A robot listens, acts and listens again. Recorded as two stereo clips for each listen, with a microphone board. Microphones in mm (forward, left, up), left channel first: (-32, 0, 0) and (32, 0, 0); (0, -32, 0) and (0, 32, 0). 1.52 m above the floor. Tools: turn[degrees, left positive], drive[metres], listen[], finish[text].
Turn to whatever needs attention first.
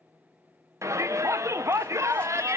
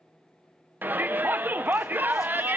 Thought: The shout: 30° left.
Action: turn[30]
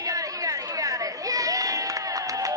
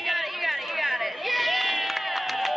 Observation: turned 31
Action: finish[Found it: a shout, straight ahead, under 1 m away.]